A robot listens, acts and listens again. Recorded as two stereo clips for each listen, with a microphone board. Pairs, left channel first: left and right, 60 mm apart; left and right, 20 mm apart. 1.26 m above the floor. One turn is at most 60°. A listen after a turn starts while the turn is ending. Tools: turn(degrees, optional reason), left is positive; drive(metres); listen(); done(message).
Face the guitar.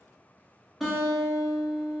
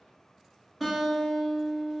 turn(degrees=30)
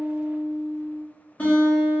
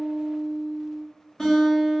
turn(degrees=60, reason="So it is at 150° left.")
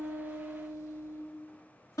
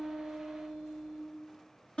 turn(degrees=60, reason="The guitar is now 90° left.")
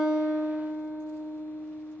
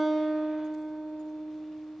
turn(degrees=30, reason="The guitar is now 30° left.")
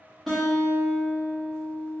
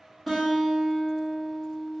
done("Found it: a guitar, straight ahead.")